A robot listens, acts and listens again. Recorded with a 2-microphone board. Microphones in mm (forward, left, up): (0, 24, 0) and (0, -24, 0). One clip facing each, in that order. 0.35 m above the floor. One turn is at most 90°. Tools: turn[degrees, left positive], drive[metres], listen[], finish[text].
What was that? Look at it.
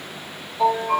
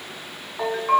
Thought: The ringtone: about 55° right or 125° right.
Action: turn[-55]
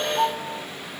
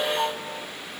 Action: finish[Found it: a ringtone, straight ahead.]